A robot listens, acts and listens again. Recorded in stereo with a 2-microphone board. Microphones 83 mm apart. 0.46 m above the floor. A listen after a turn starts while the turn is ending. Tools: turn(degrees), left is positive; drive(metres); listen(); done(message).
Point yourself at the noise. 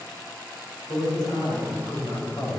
turn(degrees=65)
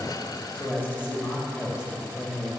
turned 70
turn(degrees=45)
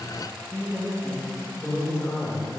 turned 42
turn(degrees=35)
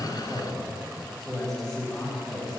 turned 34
done("Facing the man speaking.")